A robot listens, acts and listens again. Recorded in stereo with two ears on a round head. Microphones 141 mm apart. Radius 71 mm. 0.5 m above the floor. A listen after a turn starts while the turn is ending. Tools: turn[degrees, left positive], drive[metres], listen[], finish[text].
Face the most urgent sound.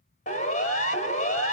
Thought: The siren: about 50° left or 130° left.
Action: turn[50]
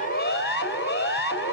Thought: So it is at 75° left.
Action: turn[75]
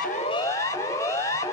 Thought: The siren is now 15° left.
Action: turn[15]
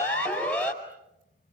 Action: finish[Facing the siren.]